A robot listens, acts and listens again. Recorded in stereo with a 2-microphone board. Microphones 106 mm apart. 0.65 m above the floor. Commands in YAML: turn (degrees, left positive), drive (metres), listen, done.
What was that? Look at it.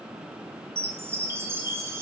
turn: -25
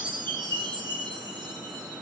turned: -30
turn: -120
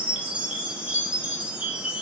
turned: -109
turn: -10
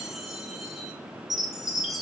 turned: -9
done: "Found it: a chime, straight ahead, under 1 m away."